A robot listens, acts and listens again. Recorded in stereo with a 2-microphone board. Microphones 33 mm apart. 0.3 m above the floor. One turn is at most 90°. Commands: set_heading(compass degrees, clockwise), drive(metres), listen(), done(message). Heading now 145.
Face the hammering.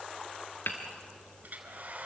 set_heading(55)
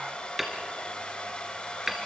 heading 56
done("Facing the hammering.")